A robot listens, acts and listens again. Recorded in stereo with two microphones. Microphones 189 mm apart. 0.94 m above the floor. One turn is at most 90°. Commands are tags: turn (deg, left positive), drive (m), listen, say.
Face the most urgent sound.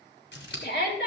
<turn deg="60"/>
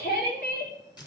<turn deg="55"/>
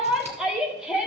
<say>Facing the shout, 2 to 4 m away.</say>